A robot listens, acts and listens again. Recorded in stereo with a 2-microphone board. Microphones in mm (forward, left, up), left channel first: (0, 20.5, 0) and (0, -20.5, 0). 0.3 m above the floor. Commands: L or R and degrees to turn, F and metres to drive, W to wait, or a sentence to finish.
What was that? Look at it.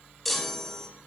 L30
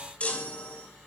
L145
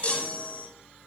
L30
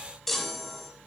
Found it: a chime, straight ahead, 1 to 2 m away.